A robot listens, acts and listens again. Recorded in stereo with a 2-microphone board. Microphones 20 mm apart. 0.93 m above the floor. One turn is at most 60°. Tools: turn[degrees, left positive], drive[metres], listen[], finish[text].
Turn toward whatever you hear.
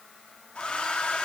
Thought: The hair dryer: about 65° left or 115° left.
Action: turn[60]
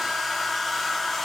Thought: So it is at 10° left.
Action: turn[10]
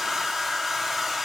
Action: finish[Facing the hair dryer, 1 to 2 m away.]